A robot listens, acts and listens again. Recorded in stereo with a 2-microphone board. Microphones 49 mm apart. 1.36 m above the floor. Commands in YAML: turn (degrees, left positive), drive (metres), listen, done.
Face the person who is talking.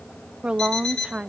turn: -25
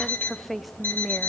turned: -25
done: "Facing the woman speaking, under 1 m away."